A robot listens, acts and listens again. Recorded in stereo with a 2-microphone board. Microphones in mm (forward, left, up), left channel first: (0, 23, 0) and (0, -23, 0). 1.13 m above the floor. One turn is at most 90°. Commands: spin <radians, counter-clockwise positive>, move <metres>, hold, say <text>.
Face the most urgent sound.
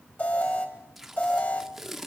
spin 0.70
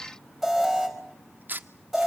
say Facing the alarm.